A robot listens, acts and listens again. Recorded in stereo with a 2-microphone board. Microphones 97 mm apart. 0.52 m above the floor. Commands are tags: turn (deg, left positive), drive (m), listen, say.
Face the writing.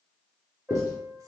<turn deg="35"/>
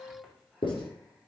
<turn deg="105"/>
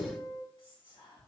<turn deg="20"/>
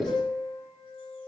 <turn deg="10"/>
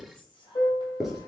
<say>Facing the writing, 2 to 4 m away.</say>